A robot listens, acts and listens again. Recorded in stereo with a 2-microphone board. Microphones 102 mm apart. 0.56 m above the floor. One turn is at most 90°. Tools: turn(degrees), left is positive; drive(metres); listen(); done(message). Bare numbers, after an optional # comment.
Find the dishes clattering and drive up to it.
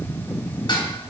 # The dishes clattering: about 50° left or 130° left.
turn(50)
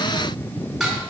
drive(1.0)
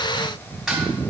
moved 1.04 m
drive(1.0)
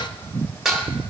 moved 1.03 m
drive(1.0)
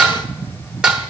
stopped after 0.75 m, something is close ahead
done("I am next to the dishes clattering.")